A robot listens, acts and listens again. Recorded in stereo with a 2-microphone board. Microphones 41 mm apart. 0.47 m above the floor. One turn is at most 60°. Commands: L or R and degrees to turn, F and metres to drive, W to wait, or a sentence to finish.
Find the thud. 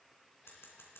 W
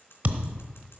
R40
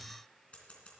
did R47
W
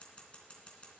I heard a thud, but can't make it out now. It was about 10° left or 95° right.